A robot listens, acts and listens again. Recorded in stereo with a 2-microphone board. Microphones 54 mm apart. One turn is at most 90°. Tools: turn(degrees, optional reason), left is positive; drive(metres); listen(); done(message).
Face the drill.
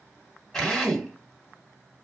turn(degrees=30)
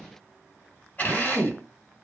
turn(degrees=90, reason="So it is at 145° left.")
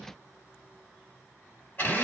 turn(degrees=40, reason="The drill is now 40° left.")
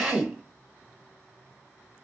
turn(degrees=-15, reason="The drill is now 15° right.")
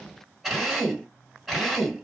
done("Found it: a drill, straight ahead.")